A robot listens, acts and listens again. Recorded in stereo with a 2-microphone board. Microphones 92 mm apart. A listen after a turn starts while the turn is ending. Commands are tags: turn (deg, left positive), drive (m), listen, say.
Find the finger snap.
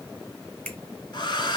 <turn deg="15"/>
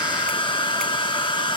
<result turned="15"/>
<listen/>
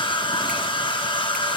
<listen/>
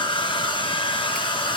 <say>I heard a finger snap, but can't make it out now. It was about straight ahead or 150° left.</say>